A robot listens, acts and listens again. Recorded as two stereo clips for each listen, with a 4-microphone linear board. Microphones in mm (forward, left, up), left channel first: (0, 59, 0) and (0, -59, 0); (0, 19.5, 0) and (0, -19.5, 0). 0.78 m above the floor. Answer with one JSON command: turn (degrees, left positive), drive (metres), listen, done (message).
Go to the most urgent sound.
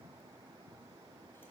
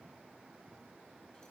{"listen": true}
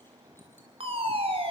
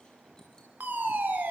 {"turn": -50}
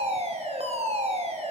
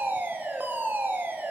{"turn": -70}
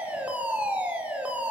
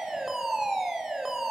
{"turn": -10}
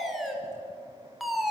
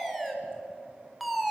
{"drive": 1.0}
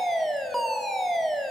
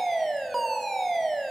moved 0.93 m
{"drive": 1.0}
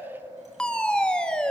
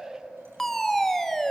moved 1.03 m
{"turn": 10}
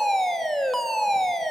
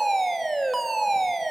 {"drive": 1.0}
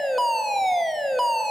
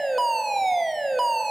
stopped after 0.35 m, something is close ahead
{"done": "I am next to the fire alarm."}